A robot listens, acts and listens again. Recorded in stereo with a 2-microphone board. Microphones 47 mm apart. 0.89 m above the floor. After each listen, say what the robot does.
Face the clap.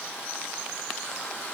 Keep listening.
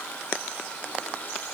Keep listening.
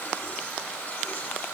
I can't make out a clap to turn to.